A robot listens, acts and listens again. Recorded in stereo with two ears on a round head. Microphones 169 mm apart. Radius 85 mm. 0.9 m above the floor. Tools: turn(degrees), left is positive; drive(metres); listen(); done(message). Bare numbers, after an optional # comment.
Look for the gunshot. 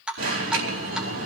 listen()
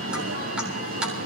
listen()
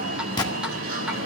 # The gunshot: about 25° left or 155° left.
turn(25)
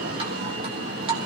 listen()
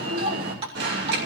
done("I heard a gunshot, but can't make it out now. It was about straight ahead or 130° left.")